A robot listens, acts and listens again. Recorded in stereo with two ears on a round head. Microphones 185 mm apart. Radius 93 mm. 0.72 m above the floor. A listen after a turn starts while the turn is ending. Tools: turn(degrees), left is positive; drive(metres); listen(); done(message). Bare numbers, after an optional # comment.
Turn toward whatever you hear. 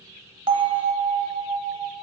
# The bell: about 25° right or 155° right.
turn(-25)
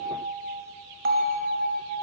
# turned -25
# So it is at 125° right.
turn(-125)
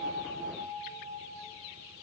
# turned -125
# The bell is now 45° right.
turn(-45)
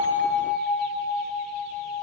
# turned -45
done("Found it: a bell, straight ahead, under 1 m away.")